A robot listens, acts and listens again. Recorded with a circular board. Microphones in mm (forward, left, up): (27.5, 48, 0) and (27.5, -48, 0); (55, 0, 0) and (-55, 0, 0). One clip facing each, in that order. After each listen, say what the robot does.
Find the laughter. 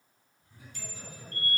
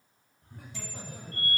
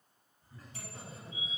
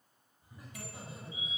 Turn 110° right.
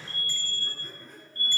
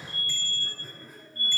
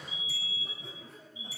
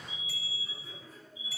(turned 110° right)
Facing the laughter.